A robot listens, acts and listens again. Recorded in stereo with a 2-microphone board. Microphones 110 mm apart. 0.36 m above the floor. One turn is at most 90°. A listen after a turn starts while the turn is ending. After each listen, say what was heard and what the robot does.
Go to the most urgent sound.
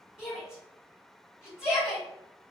Turn 30° right.
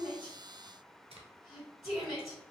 So it is at 140° right. Turn 90° right.
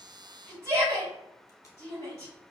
The shout is now 40° right. Turn 40° right.
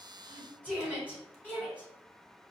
The shout is now 20° left. Turn 20° left.
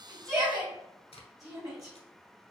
Drive 1.0 m forward.
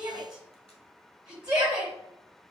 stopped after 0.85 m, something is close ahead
The shout is now 15° right. Turn 15° right.
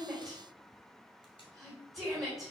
Arrived at the shout, straight ahead.